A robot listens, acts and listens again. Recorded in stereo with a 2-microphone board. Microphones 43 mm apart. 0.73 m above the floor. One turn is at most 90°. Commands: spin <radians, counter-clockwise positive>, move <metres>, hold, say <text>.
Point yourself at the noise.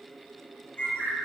spin 0.70
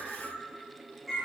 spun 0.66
say Found it: a bird, straight ahead.